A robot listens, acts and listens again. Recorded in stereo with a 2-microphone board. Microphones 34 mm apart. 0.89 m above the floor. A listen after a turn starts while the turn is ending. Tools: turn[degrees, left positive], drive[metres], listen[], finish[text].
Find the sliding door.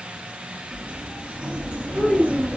Thought: The sliding door: about 45° right or 135° right.
Action: turn[-45]
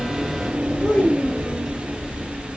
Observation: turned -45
Action: finish[Facing the sliding door, under 1 m away.]